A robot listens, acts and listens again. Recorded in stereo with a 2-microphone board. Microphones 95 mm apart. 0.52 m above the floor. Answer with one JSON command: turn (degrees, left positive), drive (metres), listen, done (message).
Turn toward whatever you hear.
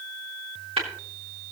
{"turn": -90}
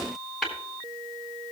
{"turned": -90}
{"done": "Found it: tapping, straight ahead."}